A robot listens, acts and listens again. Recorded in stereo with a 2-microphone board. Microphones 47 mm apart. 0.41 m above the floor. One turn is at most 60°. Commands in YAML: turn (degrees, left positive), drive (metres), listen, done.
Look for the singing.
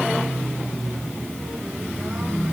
listen: true
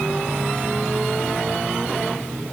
listen: true
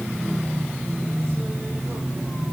done: "I can't make out singing."